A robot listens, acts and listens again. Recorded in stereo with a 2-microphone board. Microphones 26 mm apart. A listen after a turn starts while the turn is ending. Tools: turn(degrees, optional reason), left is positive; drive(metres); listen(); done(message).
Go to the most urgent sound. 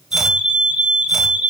turn(degrees=-40, reason="The fire alarm: about 40° right or 140° right.")
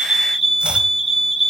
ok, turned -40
drive(metres=1.0)
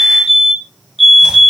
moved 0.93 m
drive(metres=1.0)
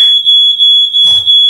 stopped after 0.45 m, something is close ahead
done("Arrived at the fire alarm, straight ahead.")